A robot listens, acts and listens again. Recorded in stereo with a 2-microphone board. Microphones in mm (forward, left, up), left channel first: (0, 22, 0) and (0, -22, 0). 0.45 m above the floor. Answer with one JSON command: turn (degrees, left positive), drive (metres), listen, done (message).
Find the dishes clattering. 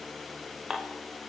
{"turn": -30}
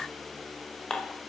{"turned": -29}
{"turn": 20}
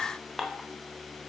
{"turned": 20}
{"done": "Facing the dishes clattering."}